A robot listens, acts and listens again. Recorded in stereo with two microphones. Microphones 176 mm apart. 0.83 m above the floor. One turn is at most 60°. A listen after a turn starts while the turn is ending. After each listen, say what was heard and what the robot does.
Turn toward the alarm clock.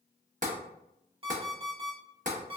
The alarm clock: about 35° right or 145° right. Turn 35° right.
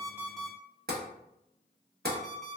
Facing the alarm clock, 1 to 2 m away.